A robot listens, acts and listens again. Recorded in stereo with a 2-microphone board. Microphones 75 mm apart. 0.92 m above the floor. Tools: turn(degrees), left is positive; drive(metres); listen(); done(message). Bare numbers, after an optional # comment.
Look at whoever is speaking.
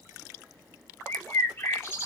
listen()
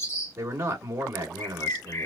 # The man speaking: about 40° right or 140° right.
turn(-40)
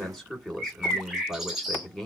done("Facing the man speaking.")